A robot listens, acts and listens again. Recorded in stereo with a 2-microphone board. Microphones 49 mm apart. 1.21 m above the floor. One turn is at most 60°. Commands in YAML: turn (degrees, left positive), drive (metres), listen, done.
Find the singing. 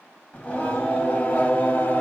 turn: 30
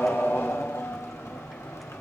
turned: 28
turn: 60
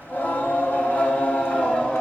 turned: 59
turn: 25
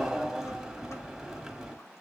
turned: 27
done: "Found it: singing, straight ahead."